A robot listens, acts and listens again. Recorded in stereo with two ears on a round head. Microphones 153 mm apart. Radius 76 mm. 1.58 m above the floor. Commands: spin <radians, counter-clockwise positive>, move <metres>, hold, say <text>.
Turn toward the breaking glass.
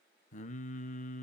hold
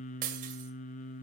spin -0.96
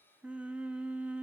hold
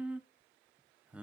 say I heard breaking glass, but can't make it out now. It was about straight ahead or 70° right.